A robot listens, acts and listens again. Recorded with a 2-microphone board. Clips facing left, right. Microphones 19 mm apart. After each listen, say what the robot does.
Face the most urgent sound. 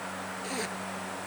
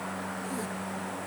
Keep listening.
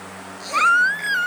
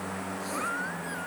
Turn 90° left.
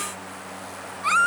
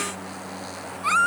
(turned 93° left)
Found it: a baby crying, straight ahead.